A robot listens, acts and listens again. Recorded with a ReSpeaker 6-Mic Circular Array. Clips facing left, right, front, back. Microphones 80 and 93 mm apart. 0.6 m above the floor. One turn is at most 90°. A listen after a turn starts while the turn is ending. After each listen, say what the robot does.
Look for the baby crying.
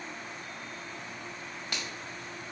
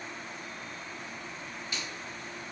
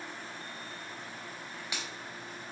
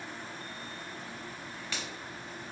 Keep listening.
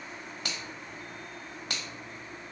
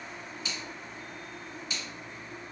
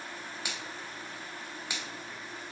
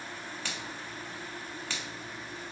Keep listening.
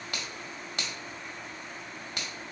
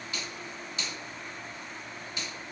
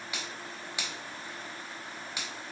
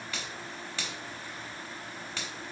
I can't make out a baby crying to turn to.